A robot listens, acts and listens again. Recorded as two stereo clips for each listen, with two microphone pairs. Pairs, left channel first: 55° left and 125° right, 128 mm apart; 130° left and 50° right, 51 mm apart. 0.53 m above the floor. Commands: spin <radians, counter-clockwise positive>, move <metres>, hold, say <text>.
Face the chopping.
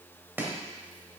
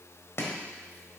spin 2.79
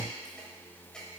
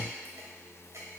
spin -0.52
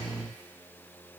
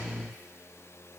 hold
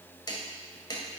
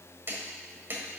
say Found it: chopping, straight ahead.